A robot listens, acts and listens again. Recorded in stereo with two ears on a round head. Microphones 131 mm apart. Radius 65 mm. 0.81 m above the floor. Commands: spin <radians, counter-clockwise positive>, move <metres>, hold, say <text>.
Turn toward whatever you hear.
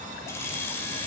spin 0.26
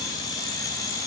spin 0.44
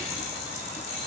spin 2.27
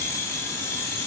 spin 0.35
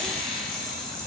say Found it: keys jangling, straight ahead.